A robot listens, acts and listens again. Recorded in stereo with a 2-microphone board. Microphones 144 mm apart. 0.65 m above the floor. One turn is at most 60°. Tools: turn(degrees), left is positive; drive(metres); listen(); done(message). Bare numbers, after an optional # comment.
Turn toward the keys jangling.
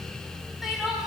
listen()
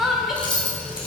# The keys jangling: about 35° left or 145° left.
turn(35)
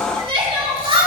listen()
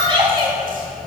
listen()
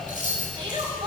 # So it is at 105° left.
turn(60)
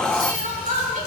# Nothing new. It was at 45° left.
turn(45)
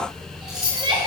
done("Facing the keys jangling.")